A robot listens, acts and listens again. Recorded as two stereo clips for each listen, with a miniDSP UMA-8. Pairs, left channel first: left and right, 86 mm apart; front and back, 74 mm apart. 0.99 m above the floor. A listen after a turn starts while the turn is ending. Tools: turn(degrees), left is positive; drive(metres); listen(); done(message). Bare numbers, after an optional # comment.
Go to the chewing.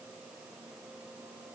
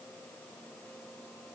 listen()
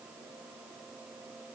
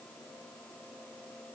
listen()
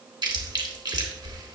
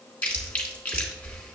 # The chewing: 70° right.
turn(-70)
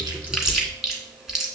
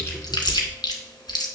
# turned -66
drive(1.0)
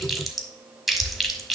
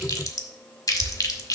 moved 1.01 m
drive(1.0)
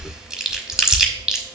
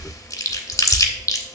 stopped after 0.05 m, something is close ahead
# The chewing is now 10° right.
turn(-10)
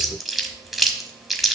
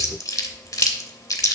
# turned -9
done("Arrived at the chewing, straight ahead.")